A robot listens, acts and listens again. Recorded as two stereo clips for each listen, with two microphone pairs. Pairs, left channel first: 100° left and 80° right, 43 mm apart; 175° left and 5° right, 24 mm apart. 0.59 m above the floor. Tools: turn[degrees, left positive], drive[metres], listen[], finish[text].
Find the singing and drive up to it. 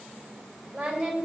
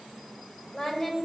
Thought: The singing: 145° right.
Action: turn[-145]
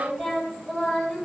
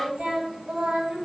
Action: drive[1.0]
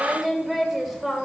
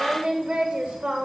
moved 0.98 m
Action: drive[1.0]
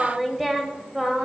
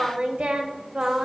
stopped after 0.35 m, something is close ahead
Action: finish[I am next to the singing.]